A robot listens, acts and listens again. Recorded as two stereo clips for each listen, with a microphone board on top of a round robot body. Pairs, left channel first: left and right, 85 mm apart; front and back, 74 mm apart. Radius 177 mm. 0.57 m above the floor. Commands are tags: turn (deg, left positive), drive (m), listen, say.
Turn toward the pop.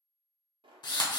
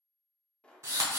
<turn deg="-75"/>
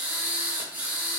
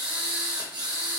<say>Facing where the pop came from. I can't hear it now.</say>